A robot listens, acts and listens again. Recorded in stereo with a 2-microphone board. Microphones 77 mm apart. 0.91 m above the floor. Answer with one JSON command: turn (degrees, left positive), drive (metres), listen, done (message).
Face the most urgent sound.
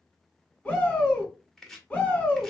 {"turn": 20}
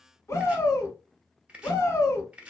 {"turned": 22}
{"turn": 140}
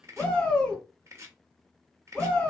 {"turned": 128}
{"turn": 10}
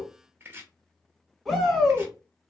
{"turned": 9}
{"done": "Found it: a shout, straight ahead, 1 to 2 m away."}